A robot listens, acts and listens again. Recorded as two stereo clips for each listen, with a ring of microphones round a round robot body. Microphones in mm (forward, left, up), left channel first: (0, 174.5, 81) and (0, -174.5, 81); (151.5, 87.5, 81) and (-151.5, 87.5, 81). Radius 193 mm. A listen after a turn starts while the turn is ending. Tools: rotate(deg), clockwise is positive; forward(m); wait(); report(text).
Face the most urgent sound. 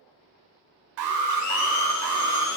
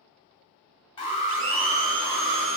rotate(75)
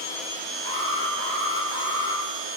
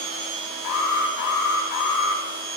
rotate(-10)
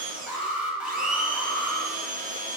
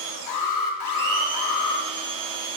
report("Found it: an alarm, straight ahead.")